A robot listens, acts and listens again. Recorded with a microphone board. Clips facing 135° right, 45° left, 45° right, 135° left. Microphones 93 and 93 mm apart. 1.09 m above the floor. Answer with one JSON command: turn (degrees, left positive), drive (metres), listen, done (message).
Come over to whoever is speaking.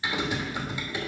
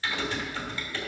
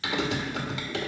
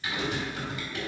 {"listen": true}
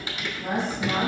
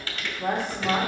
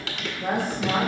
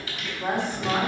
{"turn": 65}
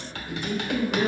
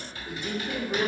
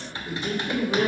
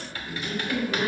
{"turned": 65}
{"turn": 10}
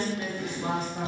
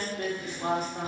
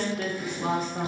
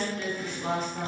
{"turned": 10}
{"drive": 1.0}
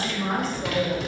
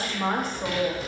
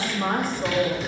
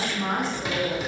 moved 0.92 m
{"drive": 1.0}
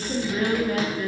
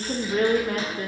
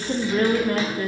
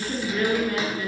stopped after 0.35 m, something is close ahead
{"done": "I am next to the woman speaking."}